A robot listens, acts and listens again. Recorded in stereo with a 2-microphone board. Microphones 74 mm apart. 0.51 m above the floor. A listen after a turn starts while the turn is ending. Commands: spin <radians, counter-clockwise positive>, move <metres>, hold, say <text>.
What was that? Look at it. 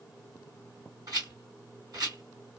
spin -0.96
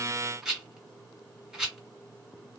say Facing the rattle.